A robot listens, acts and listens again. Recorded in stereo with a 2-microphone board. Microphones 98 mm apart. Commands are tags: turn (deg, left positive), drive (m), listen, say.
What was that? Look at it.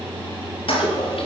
<turn deg="65"/>
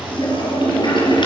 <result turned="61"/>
<turn deg="55"/>
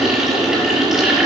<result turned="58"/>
<say>Facing the toilet flushing, over 4 m away.</say>